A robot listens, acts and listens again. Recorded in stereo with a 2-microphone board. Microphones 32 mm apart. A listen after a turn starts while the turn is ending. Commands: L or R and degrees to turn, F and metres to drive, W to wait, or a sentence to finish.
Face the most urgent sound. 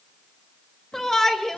L30
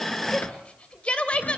L130
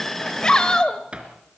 L25
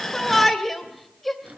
Found it: a shout, straight ahead, 2 to 4 m away.